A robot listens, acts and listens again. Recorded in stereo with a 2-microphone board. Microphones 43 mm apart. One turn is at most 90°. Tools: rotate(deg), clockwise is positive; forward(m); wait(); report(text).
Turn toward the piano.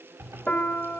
rotate(-40)
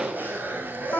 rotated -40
rotate(-90)
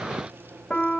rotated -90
rotate(-25)
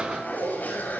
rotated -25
wait()
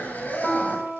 rotate(-10)
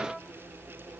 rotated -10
wait()
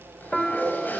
report("Found it: a piano, straight ahead, 1 to 2 m away.")